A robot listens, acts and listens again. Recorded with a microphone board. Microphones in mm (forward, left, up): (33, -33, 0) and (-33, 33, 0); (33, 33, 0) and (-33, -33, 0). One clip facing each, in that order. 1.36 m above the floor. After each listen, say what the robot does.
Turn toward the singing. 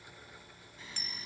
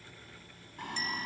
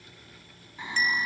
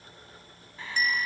Turn 115° left.
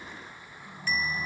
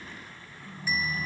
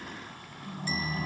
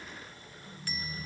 Turn 25° left.
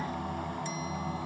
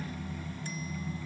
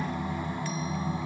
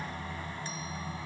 Turn 25° right.
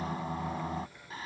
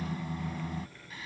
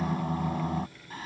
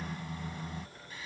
Facing the singing.